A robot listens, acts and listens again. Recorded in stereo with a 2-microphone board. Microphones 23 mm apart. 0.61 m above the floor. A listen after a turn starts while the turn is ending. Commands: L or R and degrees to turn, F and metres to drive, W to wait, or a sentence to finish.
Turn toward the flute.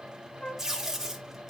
L50
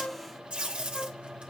W
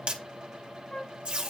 L70
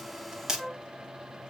Found it: a flute, straight ahead.